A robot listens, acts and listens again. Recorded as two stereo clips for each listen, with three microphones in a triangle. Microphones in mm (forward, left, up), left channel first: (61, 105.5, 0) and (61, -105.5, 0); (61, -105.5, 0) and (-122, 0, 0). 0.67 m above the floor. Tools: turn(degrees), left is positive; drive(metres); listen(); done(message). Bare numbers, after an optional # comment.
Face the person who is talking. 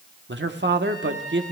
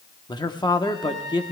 # The man speaking: 100° right.
turn(-100)
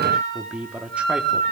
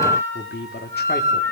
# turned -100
done("Found it: a man speaking, straight ahead.")